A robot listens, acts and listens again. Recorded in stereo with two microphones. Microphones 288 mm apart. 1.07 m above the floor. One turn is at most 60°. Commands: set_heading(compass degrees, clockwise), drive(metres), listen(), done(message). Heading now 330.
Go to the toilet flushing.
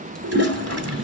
set_heading(30)
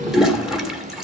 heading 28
drive(1.0)
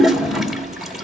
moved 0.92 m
drive(1.0)
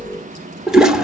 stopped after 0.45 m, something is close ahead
done("I am next to the toilet flushing.")